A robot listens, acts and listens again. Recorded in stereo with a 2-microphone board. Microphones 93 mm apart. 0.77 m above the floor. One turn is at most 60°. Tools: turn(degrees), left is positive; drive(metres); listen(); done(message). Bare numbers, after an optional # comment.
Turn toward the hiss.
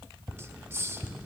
# The hiss: about 30° right or 150° right.
turn(-30)
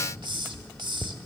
# So it is at 120° right.
turn(-60)
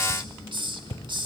# The hiss is now 65° right.
turn(-60)
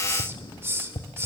# The hiss is now 30° right.
turn(-30)
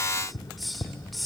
done("Facing the hiss.")